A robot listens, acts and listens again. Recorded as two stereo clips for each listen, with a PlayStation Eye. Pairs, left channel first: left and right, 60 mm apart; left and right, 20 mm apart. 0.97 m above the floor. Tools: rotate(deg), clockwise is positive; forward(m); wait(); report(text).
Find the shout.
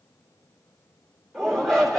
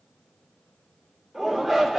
rotate(-30)
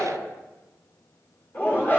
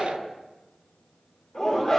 rotate(-145)
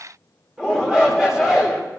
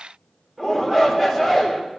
rotate(10)
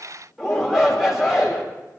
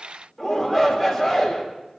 report("Found it: a shout, straight ahead.")